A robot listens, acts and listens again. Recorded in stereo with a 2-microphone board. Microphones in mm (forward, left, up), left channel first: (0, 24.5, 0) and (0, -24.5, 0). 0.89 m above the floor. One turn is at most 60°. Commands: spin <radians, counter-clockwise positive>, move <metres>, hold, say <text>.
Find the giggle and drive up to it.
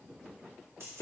hold
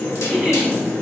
spin -0.52
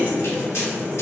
hold
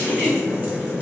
spin -1.05
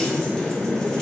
spin -1.05
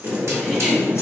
hold
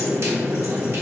say I heard a giggle from this way, but can't make it out now. I did not reach it.